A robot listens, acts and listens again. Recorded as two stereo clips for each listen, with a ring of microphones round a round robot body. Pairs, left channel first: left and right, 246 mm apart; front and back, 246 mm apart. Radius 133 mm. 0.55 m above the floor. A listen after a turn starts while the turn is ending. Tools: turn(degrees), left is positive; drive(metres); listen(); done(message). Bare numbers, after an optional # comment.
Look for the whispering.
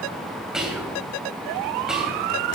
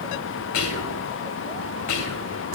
done("Facing the whispering, 2 to 4 m away.")